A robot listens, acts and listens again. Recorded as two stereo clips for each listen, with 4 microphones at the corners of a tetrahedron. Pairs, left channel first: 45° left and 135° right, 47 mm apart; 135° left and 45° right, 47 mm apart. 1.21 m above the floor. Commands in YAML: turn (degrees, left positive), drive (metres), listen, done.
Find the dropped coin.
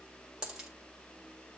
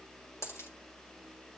turn: 150
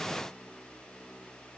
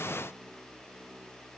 done: "I heard a dropped coin from this way, but can't make it out now."